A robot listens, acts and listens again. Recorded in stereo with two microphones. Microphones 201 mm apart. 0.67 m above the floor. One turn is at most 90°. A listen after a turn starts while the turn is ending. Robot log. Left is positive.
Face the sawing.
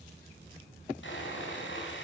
note: The sawing: about 75° left or 105° left.
cmd yaw +75
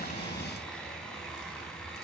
end: Found it: sawing, straight ahead.